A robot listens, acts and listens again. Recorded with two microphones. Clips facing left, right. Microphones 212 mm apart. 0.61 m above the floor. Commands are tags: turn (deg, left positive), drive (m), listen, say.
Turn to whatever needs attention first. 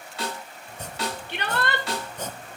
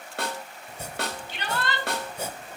<turn deg="60"/>
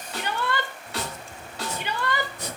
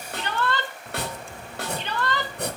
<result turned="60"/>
<turn deg="10"/>
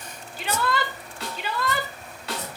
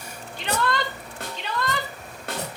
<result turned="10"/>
<say>Facing the shout, 2 to 4 m away.</say>